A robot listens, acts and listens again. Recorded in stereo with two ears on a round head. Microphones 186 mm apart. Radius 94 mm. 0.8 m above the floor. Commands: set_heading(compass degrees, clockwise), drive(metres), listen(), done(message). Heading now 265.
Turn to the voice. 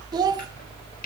set_heading(285)
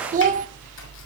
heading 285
set_heading(65)
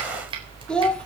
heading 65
done("Found it: a child speaking, straight ahead, 1 to 2 m away.")